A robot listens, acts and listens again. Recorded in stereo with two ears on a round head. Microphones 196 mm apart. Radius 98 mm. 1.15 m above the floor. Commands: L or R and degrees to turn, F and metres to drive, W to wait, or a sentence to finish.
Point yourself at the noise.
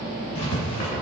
L30
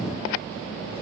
W
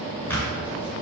L10
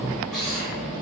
Found it: writing, straight ahead.